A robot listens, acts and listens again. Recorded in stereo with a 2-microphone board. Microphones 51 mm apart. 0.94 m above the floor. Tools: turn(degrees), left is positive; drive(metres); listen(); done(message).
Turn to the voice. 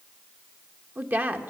turn(degrees=-35)
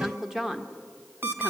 done("Found it: a woman speaking, straight ahead, 1 to 2 m away.")